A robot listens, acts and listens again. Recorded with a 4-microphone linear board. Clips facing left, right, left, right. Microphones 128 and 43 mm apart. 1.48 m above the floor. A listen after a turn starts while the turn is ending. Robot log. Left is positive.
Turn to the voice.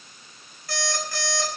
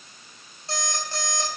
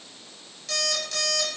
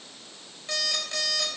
cmd idle
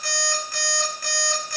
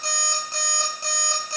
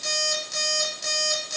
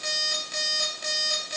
cmd idle
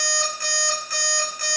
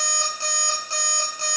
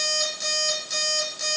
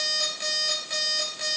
end: I can't make out anyone speaking to turn to.